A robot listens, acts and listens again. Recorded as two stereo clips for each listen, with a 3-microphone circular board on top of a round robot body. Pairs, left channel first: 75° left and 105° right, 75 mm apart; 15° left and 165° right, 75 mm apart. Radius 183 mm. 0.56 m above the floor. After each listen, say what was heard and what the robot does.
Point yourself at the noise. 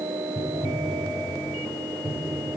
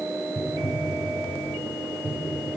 The tapping: 130° left. Turn 130° left.
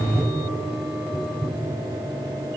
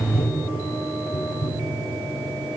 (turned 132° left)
Found it: tapping, straight ahead.